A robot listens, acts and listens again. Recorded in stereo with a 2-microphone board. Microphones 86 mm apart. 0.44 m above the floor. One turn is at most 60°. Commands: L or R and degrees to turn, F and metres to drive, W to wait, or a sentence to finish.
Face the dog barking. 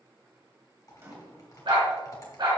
R55
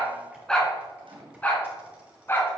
L25
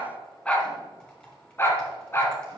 L25
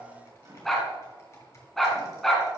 Found it: a dog barking, straight ahead.